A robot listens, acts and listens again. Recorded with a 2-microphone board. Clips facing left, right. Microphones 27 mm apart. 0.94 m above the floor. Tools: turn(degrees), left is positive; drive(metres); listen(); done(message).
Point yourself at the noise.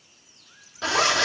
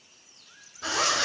turn(degrees=55)
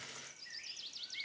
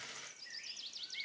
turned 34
listen()
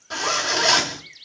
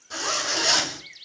turn(degrees=35)
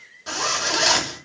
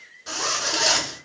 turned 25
turn(degrees=10)
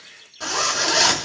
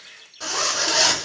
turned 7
done("Found it: a zipper, straight ahead.")